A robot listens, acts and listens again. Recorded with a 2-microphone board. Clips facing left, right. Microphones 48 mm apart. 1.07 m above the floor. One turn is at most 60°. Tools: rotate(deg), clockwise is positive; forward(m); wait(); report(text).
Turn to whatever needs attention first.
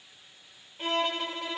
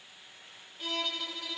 wait()
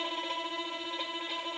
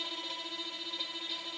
wait()
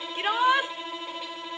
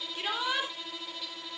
rotate(-30)
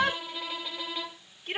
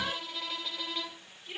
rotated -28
rotate(-60)
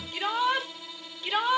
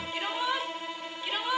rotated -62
rotate(-60)
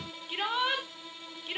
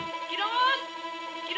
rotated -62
report("Found it: a shout, straight ahead, 2 to 4 m away.")